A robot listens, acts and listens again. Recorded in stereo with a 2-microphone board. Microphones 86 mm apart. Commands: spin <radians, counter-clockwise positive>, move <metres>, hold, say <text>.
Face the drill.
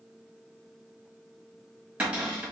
hold
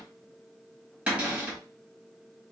hold
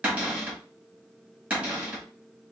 say I can't make out a drill, only a cupboard door.